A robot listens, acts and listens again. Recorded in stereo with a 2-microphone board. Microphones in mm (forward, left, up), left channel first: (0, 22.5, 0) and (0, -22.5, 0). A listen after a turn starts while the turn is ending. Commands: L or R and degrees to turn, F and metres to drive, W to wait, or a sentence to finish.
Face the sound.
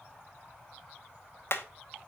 L55
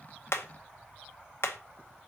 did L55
L70
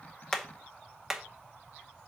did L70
R10
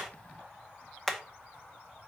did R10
Facing the hammering, under 1 m away.